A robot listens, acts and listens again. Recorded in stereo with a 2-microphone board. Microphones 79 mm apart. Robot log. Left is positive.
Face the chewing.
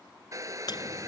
note: The chewing: about 65° left or 115° left.
cmd yaw +65
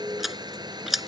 end: Found it: chewing, straight ahead.